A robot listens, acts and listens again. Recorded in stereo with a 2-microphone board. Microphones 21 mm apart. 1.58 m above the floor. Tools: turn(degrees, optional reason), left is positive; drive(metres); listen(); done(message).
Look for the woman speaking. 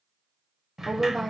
turn(degrees=30)
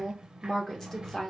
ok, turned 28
turn(degrees=150, reason="So it is at 150° left.")
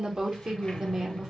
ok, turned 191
turn(degrees=-40, reason="The woman speaking is now 40° right.")
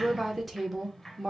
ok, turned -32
turn(degrees=-10, reason="The woman speaking is now 10° right.")
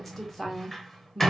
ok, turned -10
done("Facing the woman speaking, 1 to 2 m away.")